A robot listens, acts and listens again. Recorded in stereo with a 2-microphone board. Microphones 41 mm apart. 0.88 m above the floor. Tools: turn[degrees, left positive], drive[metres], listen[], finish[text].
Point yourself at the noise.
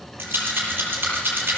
Action: turn[-90]
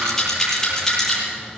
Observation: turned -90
Thought: So it is at 10° left.
Action: turn[10]
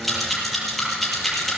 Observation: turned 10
Action: finish[Facing the rattle.]